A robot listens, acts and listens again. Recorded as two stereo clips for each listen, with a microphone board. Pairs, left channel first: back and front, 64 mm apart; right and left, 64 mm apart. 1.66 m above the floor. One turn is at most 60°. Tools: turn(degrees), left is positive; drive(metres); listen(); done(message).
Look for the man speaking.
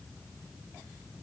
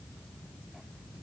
listen()
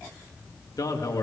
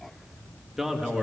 turn(degrees=60)
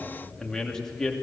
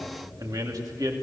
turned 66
turn(degrees=60)
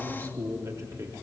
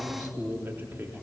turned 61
turn(degrees=35)
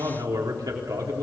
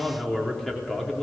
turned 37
done("Found it: a man speaking, straight ahead, 2 to 4 m away.")